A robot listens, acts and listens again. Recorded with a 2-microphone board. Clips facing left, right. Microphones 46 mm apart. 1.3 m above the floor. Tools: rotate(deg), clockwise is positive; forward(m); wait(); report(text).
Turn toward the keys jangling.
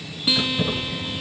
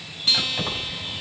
rotate(55)
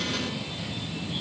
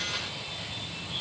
wait()
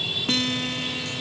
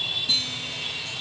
wait()
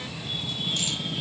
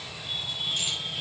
report("I heard keys jangling, but can't make it out now. It was about straight ahead or 70° right.")